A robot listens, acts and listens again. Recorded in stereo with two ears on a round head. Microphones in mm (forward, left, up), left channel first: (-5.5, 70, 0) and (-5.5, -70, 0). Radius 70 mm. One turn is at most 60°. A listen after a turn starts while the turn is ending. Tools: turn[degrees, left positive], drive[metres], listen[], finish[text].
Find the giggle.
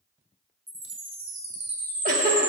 Thought: The giggle: about 55° right or 125° right.
Action: turn[-55]
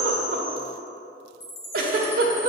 Thought: So it is at 65° right.
Action: turn[-60]
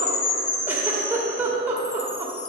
Thought: The giggle is now 15° right.
Action: turn[-15]
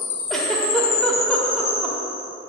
Action: finish[Found it: a giggle, straight ahead, 1 to 2 m away.]